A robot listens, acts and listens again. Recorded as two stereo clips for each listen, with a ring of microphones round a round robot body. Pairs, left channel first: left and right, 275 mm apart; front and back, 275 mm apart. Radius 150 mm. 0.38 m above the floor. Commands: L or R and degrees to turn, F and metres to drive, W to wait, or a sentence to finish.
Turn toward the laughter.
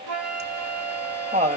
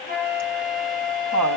R155
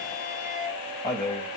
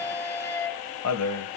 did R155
L15
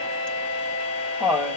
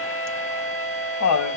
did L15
Facing the laughter.